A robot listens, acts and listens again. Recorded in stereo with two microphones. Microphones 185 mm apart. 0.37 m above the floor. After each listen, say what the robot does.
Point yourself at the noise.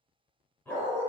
Turn 30° left.
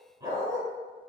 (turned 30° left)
Turn 20° right.
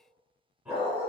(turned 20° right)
Turn 10° right.
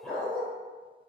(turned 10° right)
Found it: a dog barking, straight ahead.